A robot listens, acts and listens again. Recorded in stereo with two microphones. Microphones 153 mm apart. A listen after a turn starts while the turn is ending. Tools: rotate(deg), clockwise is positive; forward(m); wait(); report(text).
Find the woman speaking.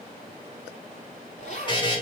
wait()
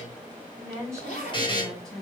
rotate(-30)
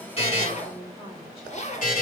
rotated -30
rotate(-140)
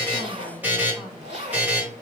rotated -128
rotate(-10)
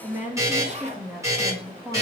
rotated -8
rotate(10)
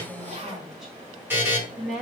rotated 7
report("Facing the woman speaking, 1 to 2 m away.")